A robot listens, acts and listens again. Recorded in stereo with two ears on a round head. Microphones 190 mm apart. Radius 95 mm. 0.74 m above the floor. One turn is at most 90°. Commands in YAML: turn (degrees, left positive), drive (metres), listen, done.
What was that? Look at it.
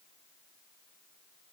listen: true
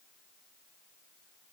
listen: true
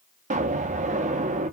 turn: -35
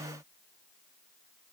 listen: true
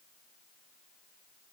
done: "I heard an explosion, but can't make it out now. It was about straight ahead or 110° right."